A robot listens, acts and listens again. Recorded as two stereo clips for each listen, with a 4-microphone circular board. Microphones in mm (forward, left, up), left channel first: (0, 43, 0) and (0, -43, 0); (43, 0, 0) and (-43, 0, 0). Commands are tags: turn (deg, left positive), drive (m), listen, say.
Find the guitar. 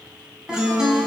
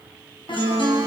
<turn deg="-10"/>
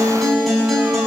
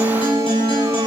<say>Found it: a guitar, straight ahead.</say>